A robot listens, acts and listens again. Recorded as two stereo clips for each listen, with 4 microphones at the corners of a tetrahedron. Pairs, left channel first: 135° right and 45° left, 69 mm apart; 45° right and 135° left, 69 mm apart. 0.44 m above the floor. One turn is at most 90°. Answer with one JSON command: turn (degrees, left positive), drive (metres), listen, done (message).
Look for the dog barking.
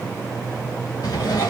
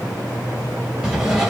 {"listen": true}
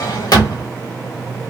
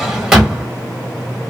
{"listen": true}
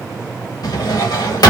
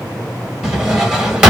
{"done": "I can't make out a dog barking to turn to."}